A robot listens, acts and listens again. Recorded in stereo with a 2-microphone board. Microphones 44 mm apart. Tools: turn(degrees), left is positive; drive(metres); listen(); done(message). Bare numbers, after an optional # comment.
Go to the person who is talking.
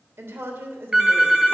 turn(-90)
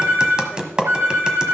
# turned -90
listen()
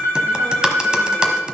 listen()
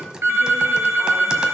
done("I heard a woman speaking from this way, but can't make it out now. I did not reach it.")